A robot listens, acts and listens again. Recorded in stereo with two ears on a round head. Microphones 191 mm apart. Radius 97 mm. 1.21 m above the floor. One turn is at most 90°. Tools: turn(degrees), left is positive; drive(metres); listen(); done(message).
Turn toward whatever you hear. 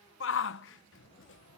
turn(degrees=65)
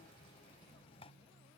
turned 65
listen()
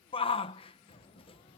turn(degrees=30)
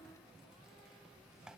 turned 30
listen()
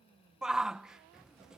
done("Found it: a shout, straight ahead.")